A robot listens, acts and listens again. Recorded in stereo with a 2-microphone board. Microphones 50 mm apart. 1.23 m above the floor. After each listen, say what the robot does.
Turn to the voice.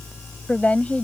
Turn 30° left.
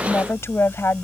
Turn 120° left.
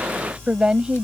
Turn 20° right.
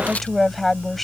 Facing the woman speaking.